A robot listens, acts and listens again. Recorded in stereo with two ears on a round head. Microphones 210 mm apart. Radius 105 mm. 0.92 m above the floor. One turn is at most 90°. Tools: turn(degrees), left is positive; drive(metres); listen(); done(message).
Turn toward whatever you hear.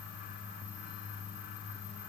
listen()
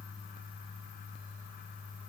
listen()
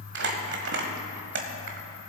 turn(degrees=-55)
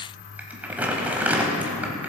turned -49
turn(degrees=-10)
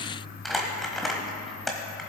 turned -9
done("Facing the crumpling, 1 to 2 m away.")